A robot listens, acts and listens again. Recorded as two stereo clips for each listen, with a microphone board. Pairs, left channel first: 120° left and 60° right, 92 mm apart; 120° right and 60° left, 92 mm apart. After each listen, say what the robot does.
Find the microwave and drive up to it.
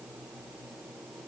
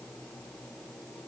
Keep listening.
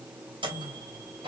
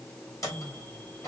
Turn 70° right.
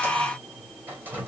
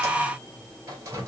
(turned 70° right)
Drive 1.0 m forward.
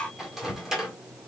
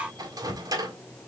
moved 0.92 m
Turn 25° left.
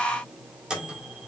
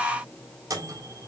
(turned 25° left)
Turn 20° left.
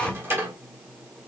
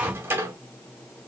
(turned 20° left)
Drive 1.0 m forward.
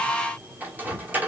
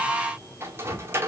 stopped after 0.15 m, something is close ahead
I am next to the microwave.